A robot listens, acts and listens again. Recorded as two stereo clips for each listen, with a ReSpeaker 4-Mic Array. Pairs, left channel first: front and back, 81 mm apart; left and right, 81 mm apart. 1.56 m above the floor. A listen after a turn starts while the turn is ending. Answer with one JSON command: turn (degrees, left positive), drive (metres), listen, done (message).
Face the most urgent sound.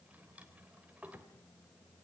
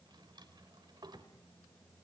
{"listen": true}
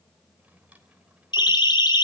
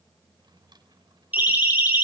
{"turn": -20}
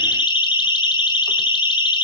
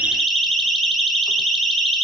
{"done": "Facing the siren."}